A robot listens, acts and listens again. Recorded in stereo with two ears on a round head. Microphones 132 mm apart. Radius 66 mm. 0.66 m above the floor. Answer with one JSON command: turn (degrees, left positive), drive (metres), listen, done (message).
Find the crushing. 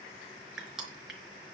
{"turn": -30}
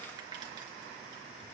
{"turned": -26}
{"listen": true}
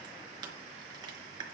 {"turn": -150}
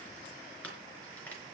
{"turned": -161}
{"turn": 10}
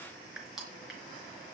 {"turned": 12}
{"done": "Facing the crushing, over 4 m away."}